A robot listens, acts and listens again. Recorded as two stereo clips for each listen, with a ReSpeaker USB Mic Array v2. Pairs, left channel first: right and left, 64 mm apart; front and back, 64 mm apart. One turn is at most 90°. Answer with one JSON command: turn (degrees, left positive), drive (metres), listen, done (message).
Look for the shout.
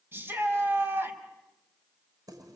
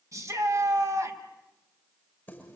{"turn": 90}
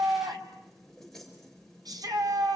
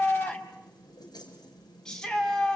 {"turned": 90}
{"turn": 80}
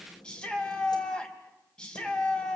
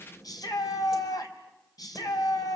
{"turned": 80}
{"turn": -15}
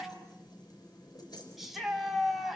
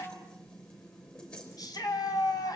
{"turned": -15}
{"done": "Found it: a shout, straight ahead."}